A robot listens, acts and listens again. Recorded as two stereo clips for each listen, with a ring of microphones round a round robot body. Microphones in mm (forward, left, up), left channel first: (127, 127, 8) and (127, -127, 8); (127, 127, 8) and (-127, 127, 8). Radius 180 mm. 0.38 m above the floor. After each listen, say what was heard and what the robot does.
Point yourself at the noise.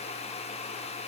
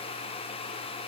Keep listening.
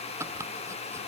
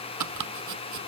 The chopping: 175° right. Turn 175° right.
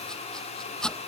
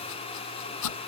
Facing the chopping.